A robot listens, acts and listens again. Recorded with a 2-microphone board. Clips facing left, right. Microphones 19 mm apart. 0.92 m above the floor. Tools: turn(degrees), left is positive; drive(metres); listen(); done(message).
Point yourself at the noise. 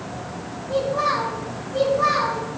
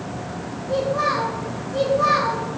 turn(degrees=30)
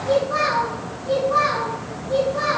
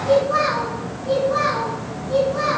turn(degrees=-20)
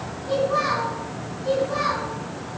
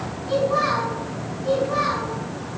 done("Facing the child speaking.")